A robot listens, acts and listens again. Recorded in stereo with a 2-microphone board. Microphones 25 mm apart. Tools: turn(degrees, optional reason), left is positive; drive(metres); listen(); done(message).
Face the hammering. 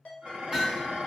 turn(degrees=-15, reason="The hammering: about 15° right or 165° right.")
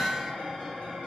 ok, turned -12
done("Facing the hammering, 1 to 2 m away.")